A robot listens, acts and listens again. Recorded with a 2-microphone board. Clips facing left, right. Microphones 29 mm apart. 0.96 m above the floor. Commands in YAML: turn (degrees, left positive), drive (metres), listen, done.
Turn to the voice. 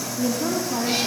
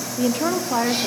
turn: -45
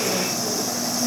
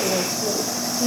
turn: -85
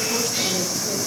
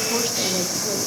listen: true
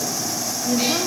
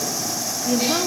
turn: -25
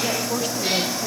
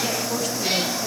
listen: true
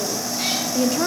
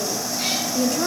turn: 10
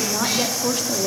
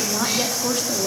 done: "Facing the woman speaking, 1 to 2 m away."